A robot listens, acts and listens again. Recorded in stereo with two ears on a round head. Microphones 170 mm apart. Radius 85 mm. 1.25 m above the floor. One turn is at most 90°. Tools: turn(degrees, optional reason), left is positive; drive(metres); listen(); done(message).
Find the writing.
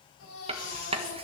turn(degrees=-30, reason="The writing: about 30° right or 150° right.")
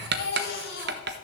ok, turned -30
turn(degrees=-90, reason="So it is at 120° right.")
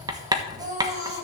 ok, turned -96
turn(degrees=-20, reason="The writing is now 20° right.")
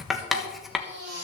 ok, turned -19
done("Facing the writing, 1 to 2 m away.")